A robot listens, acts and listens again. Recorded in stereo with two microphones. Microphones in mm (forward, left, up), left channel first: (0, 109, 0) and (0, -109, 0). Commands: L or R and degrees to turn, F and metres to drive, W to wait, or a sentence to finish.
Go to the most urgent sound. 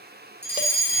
L50
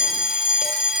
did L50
F1.0
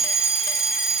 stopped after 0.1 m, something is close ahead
Blocked. The fire alarm is further on, straight ahead.